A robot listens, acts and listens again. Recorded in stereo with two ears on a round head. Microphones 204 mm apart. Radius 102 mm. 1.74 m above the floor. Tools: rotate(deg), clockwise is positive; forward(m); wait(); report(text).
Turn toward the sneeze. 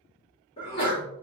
rotate(-25)
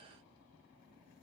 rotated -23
wait()
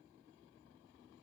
report("I heard a sneeze, but can't make it out now. It was about straight ahead or 130° left.")